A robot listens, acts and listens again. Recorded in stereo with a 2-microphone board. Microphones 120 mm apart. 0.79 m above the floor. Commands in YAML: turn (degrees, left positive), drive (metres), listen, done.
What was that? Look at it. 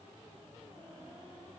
listen: true
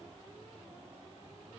listen: true
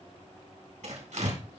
turn: -90
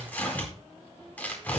turn: 15
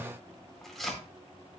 done: "Found it: tearing paper, straight ahead."